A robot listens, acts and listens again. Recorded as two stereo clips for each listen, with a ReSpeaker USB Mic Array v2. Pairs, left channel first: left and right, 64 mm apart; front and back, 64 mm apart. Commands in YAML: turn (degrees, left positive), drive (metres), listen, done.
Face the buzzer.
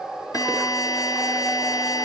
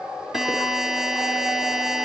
turn: 95
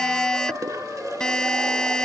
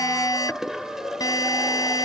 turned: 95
turn: 10
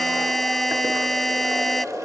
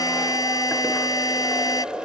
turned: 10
done: "Found it: a buzzer, straight ahead."